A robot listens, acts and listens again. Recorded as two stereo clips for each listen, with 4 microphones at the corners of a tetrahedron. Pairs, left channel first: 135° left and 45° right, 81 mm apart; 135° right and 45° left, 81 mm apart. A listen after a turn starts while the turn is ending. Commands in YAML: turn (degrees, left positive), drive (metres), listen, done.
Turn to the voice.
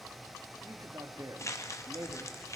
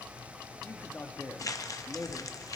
turn: -75
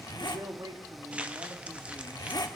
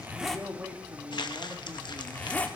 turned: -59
turn: -20
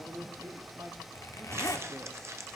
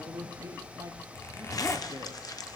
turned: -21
done: "Found it: a man speaking, straight ahead, 1 to 2 m away."